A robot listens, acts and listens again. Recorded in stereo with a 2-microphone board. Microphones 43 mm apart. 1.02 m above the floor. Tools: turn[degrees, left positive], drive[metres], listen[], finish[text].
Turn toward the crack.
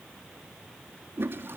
Action: listen[]
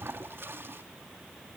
Action: listen[]
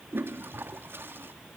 Action: finish[I can't make out a crack, only a toilet flushing.]